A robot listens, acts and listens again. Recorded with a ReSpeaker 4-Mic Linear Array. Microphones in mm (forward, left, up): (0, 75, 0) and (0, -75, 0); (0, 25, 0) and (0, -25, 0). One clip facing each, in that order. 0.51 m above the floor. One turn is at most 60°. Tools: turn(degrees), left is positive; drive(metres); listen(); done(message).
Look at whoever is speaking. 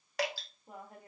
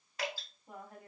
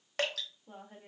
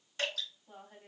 turn(degrees=30)
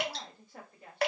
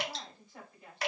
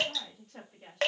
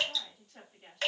turn(degrees=60)
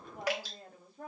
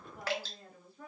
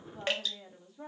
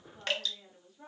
turn(degrees=60)
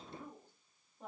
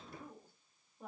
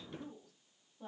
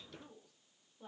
turn(degrees=-10)
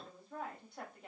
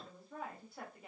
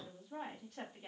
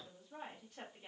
done("Facing the woman speaking, 1 to 2 m away.")